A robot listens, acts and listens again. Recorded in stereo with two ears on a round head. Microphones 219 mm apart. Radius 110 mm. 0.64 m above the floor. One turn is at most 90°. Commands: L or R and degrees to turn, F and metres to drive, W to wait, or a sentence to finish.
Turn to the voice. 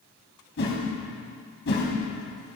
W
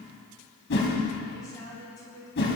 L15
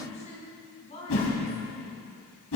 L90
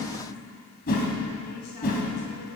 L60
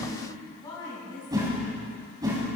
L20
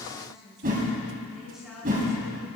Found it: a woman speaking, straight ahead, over 4 m away.